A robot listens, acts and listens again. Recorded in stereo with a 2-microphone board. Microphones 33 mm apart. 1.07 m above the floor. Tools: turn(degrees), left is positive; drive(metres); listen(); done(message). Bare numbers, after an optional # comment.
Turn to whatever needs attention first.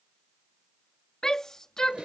# The shout: about 20° left or 160° left.
turn(20)
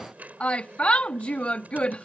# So it is at 140° left.
turn(140)
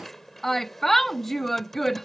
done("Facing the shout.")